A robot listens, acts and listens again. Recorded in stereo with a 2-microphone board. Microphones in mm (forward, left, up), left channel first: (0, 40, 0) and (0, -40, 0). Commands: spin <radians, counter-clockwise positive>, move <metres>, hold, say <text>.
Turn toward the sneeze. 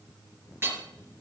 hold
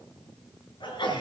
spin 1.31
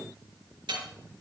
hold
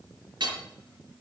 say I heard a sneeze, but can't make it out now. It was about straight ahead or 30° left.